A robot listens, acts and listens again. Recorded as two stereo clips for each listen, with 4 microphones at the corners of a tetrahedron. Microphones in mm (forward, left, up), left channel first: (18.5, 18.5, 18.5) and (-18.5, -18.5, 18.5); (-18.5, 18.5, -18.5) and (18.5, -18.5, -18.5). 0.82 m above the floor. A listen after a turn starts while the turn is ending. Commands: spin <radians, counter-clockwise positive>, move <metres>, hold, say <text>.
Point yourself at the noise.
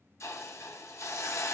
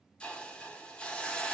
spin 1.13
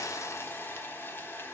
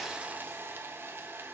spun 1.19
say Facing the hiss.